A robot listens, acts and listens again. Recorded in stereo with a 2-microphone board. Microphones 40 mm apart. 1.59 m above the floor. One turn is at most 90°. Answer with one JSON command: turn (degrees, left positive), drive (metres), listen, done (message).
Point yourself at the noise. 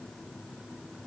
{"listen": true}
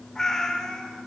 {"turn": 30}
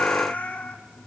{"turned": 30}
{"turn": 90}
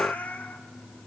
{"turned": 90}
{"turn": 45}
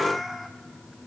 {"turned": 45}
{"done": "Facing the cat meowing, 1 to 2 m away."}